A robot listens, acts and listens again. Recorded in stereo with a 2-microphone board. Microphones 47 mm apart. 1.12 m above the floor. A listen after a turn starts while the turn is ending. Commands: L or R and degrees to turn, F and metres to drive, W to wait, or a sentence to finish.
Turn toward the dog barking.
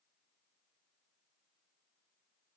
W
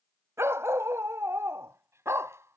R90
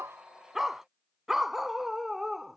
Found it: a dog barking, straight ahead.